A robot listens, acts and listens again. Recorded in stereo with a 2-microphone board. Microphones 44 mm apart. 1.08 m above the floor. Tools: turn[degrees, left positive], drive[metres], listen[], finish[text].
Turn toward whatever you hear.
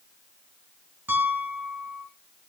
Thought: The piano: about 50° right or 130° right.
Action: turn[-50]
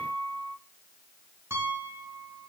Thought: So it is at 80° right.
Action: turn[-80]
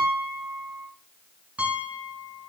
Thought: The piano is now 30° right.
Action: turn[-30]
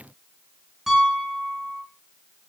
Thought: The piano is now 10° right.
Action: turn[-10]
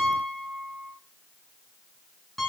Action: finish[Found it: a piano, straight ahead, over 4 m away.]